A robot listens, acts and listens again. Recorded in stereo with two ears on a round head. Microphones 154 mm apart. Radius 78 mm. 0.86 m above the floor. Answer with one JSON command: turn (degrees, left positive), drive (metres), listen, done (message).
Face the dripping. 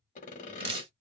{"turn": -30}
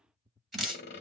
{"done": "Found it: dripping, straight ahead, 1 to 2 m away."}